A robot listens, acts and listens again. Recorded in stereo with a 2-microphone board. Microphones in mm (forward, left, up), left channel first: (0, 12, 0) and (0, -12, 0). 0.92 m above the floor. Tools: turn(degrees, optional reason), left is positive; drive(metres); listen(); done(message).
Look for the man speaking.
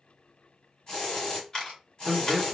turn(degrees=-30)
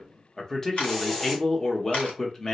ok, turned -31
turn(degrees=25, reason="So it is at 25° left.")
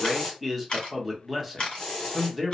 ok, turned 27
done("Facing the man speaking, under 1 m away.")